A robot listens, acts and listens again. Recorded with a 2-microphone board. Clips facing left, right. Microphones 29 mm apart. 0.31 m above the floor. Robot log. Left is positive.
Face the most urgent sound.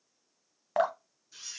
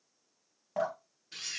cmd idle
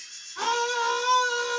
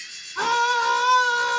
note: The scream: about 25° right or 155° right.
cmd yaw -25
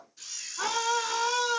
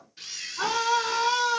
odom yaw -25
end: Facing the scream.